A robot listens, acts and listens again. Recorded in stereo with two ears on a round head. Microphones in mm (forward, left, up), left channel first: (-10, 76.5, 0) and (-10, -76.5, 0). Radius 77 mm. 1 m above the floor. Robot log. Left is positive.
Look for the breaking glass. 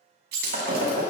note: The breaking glass: about 75° right or 105° right.
cmd yaw -75
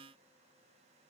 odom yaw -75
cmd idle
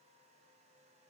end: I heard breaking glass, but can't make it out now. It was about straight ahead or 30° right.